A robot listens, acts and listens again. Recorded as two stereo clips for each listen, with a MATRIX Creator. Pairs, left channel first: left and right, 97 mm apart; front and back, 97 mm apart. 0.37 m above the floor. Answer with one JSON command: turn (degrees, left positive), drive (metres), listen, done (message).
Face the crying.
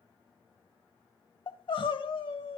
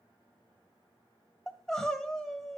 {"turn": 85}
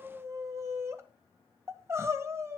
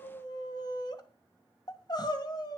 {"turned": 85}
{"turn": -35}
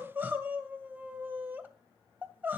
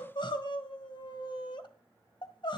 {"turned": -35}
{"turn": -20}
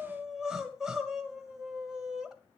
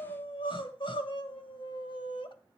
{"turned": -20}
{"done": "Found it: crying, straight ahead."}